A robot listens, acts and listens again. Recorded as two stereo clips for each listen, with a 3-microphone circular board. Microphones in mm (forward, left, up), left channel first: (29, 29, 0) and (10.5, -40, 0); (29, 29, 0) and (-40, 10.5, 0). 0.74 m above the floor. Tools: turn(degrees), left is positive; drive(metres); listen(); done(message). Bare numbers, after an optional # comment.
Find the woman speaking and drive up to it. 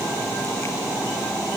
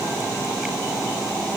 listen()
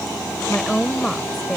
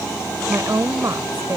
# The woman speaking: 160° left.
turn(160)
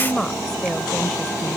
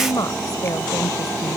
# The woman speaking is now 10° right.
turn(-10)
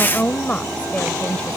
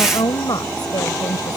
drive(1.0)
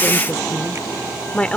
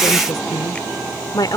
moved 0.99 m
drive(1.0)
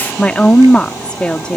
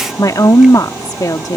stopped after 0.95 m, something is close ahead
done("Arrived at the woman speaking, straight ahead.")